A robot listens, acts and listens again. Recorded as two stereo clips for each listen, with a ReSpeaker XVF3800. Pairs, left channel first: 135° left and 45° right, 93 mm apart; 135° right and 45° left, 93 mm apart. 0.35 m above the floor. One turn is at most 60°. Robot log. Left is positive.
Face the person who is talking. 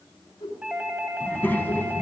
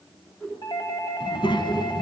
note: The child speaking: 160° right.
cmd yaw -60
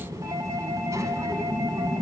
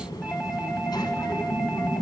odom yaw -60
note: The child speaking is now 95° right.
cmd yaw -60
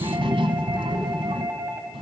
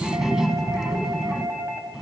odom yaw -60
note: The child speaking is now 40° right.
cmd yaw -40
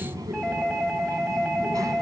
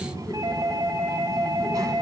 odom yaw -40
end: Facing the child speaking, 1 to 2 m away.